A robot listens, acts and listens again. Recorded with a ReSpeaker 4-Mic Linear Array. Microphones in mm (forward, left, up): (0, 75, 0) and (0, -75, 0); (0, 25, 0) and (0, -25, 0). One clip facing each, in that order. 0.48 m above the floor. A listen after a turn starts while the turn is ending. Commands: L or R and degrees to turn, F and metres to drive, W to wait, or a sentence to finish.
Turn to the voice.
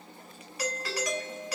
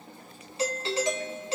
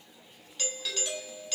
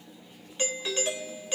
W
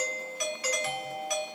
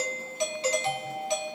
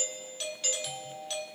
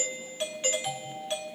W
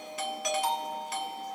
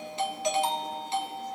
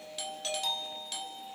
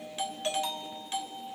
I can't make out anyone speaking to turn to.